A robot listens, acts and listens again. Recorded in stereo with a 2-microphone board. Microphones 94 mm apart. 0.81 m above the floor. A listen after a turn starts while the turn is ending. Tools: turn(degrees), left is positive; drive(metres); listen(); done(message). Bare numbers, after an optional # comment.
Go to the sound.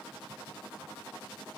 listen()
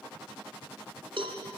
# The cowbell: about 70° right or 110° right.
turn(-70)
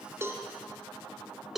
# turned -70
drive(1.0)
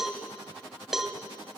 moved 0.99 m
drive(1.0)
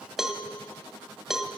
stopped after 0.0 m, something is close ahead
done("I am next to the cowbell.")